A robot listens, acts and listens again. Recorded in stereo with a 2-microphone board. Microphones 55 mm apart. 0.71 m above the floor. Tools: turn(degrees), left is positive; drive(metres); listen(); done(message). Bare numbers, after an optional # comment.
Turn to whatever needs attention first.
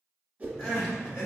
# The crying: about 65° left or 115° left.
turn(65)
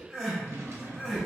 done("Found it: crying, straight ahead, 1 to 2 m away.")